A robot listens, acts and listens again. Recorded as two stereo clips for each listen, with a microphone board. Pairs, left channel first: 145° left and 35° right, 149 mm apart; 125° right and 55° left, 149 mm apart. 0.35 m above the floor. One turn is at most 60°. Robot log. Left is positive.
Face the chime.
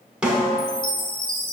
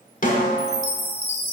note: The chime: 60° left.
cmd yaw +60
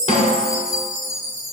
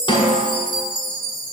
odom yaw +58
end: Facing the chime.